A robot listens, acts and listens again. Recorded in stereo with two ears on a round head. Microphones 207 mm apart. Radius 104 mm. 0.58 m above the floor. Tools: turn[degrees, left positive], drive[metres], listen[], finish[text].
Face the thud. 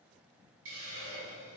Action: listen[]
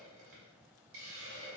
Action: listen[]
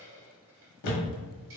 Action: turn[90]
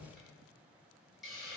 Action: finish[I heard a thud from this way, but can't make it out now.]